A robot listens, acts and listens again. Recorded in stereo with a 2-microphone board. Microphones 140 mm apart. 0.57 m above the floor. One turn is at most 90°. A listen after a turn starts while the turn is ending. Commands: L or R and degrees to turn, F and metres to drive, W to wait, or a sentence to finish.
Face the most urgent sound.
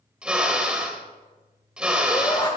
L30
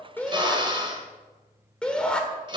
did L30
L10
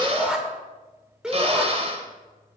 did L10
Facing the shout, 2 to 4 m away.